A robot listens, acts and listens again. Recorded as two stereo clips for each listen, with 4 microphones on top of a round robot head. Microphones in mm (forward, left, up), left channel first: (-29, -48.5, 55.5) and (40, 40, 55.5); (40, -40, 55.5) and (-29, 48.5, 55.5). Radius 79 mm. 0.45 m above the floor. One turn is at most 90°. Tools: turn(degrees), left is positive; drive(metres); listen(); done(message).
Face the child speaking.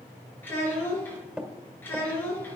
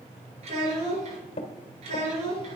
turn(degrees=90)
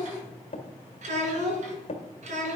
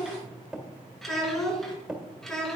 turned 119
turn(degrees=35)
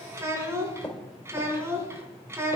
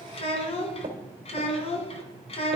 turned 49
turn(degrees=-15)
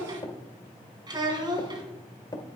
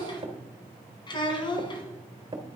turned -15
done("Found it: a child speaking, straight ahead, 2 to 4 m away.")